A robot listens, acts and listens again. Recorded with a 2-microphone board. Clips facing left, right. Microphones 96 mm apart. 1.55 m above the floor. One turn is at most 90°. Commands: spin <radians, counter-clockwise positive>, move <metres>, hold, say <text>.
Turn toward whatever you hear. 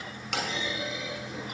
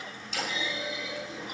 spin 1.13
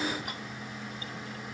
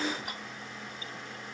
hold
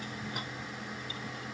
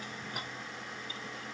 say I heard a clunk, but can't make it out now. It was about straight ahead or 50° left.